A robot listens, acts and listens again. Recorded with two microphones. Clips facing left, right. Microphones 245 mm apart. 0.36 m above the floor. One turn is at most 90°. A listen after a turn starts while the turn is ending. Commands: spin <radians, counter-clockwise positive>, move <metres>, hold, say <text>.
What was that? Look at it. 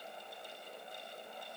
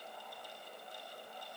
hold
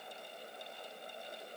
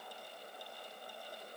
hold
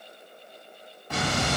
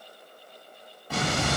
spin -0.52
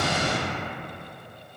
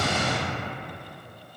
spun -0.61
spin 0.44
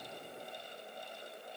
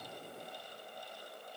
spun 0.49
say Facing where the explosion came from. I can't hear it now.